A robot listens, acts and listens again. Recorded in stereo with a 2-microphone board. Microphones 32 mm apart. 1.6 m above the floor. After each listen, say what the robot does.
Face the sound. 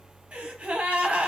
Turn 50° right.
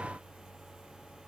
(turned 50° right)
Keep listening.
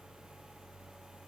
I heard a gasp, but can't make it out now. It was about straight ahead or 80° right.